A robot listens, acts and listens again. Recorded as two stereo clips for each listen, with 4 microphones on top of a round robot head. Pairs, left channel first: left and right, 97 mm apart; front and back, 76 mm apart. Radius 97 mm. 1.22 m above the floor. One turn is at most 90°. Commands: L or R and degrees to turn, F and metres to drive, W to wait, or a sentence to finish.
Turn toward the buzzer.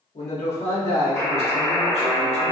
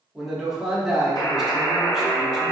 L25
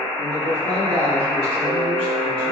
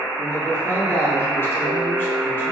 R10
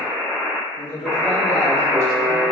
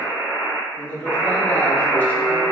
Facing the buzzer.